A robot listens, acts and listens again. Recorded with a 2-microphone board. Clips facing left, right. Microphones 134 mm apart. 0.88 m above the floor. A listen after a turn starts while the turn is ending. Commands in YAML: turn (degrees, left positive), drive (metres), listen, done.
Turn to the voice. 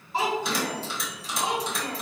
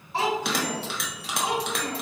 turn: -30
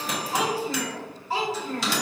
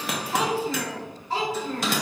done: "Facing the child speaking, 2 to 4 m away."